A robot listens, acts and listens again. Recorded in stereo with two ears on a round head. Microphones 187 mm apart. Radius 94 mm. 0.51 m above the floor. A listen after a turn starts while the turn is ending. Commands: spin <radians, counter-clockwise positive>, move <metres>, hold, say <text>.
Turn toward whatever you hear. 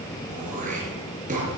spin -0.61
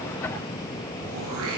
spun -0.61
spin -1.92
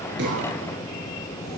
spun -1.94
hold
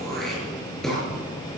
say Facing the throat clearing, over 4 m away.